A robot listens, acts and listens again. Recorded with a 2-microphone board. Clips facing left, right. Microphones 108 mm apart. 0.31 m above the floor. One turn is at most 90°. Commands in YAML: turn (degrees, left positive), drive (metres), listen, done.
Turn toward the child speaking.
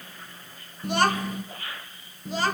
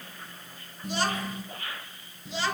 turn: 45
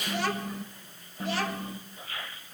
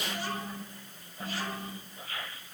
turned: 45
turn: 80
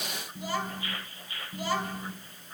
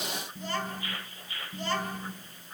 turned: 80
turn: 10
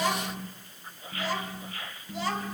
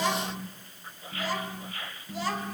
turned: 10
done: "Facing the child speaking."